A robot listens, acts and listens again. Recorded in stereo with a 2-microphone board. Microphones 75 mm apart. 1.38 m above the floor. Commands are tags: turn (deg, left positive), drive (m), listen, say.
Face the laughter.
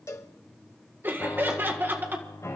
<turn deg="-25"/>
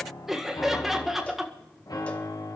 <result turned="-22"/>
<say>Found it: laughter, straight ahead.</say>